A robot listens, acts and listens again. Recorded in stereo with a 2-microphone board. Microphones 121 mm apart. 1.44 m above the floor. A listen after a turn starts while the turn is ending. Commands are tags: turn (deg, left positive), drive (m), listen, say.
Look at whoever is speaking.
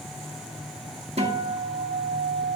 <listen/>
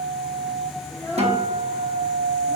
<turn deg="25"/>
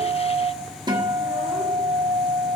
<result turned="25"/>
<listen/>
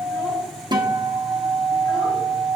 <listen/>
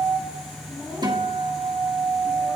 <turn deg="25"/>
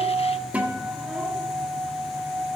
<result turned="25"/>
<listen/>
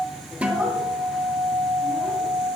<listen/>
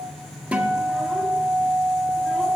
<say>I heard a child speaking, but can't make it out now. It was about straight ahead or 130° left.</say>